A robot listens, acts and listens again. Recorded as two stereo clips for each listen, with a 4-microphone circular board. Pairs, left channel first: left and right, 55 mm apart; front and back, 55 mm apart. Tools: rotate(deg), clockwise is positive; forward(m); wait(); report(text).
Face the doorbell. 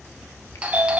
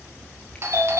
rotate(155)
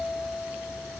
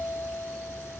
rotate(10)
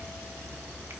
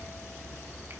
wait()
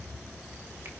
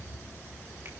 wait()
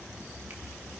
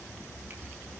report("Facing where the doorbell came from. I can't hear it now.")